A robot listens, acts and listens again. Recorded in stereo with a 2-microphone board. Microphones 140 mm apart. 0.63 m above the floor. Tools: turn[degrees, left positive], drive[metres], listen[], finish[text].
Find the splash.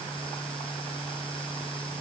Action: listen[]
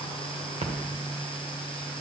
Thought: The splash: about 55° right or 125° right.
Action: turn[-55]
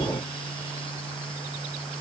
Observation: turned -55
Action: listen[]
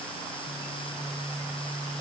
Action: finish[I heard a splash, but can't make it out now. It was about straight ahead or 70° right.]